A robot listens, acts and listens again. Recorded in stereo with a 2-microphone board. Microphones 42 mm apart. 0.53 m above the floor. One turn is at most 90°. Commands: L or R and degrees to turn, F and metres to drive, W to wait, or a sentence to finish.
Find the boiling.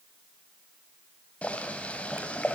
L30
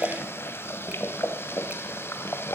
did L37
L90
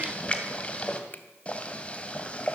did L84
L30
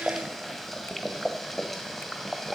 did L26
Facing the boiling, 2 to 4 m away.